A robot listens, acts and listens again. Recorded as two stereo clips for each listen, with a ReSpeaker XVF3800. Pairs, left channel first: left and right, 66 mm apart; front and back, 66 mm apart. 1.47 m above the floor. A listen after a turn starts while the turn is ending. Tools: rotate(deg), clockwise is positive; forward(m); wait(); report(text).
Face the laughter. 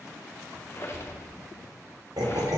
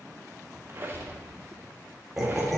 rotate(90)
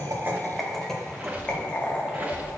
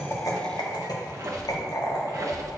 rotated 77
rotate(-30)
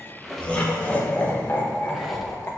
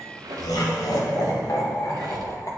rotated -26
rotate(-35)
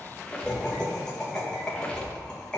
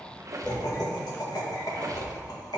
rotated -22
rotate(-15)
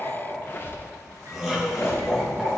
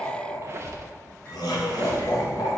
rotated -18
report("Facing the laughter, 1 to 2 m away.")